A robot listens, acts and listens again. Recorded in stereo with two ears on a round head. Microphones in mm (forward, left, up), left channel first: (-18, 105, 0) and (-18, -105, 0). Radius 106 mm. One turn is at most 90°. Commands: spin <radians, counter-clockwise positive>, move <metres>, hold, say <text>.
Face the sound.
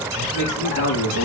spin 1.22
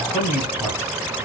spin -0.17
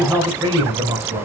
spin -0.52
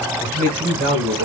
spin -0.87
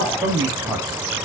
spin -0.26
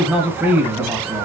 say Facing the man speaking.